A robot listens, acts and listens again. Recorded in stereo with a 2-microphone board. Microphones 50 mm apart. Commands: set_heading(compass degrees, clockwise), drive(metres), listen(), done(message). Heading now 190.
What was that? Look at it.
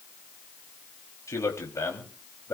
set_heading(100)
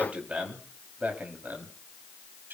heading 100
set_heading(140)
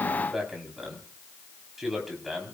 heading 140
done("Found it: a man speaking, straight ahead, over 4 m away.")